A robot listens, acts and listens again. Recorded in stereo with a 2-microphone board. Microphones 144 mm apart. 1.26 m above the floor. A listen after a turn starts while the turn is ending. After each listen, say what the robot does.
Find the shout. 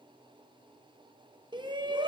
Turn 30° right.
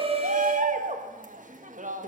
Turn 115° right.
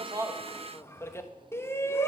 Turn 20° left.
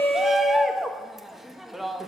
Facing the shout.